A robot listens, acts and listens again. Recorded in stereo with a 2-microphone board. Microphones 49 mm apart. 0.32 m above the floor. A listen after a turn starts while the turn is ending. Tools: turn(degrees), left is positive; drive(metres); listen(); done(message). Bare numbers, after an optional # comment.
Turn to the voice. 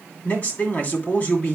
# The man speaking: about 35° left or 145° left.
turn(35)
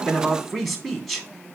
done("Facing the man speaking, 2 to 4 m away.")